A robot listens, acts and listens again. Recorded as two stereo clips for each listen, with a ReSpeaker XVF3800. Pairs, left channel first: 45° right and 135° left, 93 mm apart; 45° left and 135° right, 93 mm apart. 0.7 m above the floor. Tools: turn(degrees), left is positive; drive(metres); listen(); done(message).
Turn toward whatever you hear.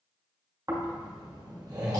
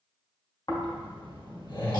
turn(degrees=85)
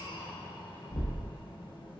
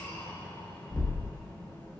turn(degrees=-15)
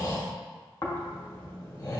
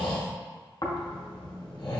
turn(degrees=10)
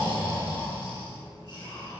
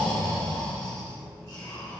done("Facing the snoring, under 1 m away.")